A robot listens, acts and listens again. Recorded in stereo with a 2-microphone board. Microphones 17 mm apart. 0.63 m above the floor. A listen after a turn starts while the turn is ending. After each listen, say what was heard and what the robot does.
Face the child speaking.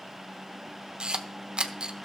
Keep listening.
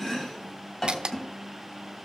Keep listening.
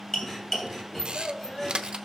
The child speaking: about 45° left or 135° left. Turn 45° left.
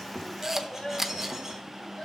So it is at 70° left. Turn 70° left.
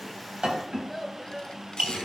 Found it: a child speaking, straight ahead, 2 to 4 m away.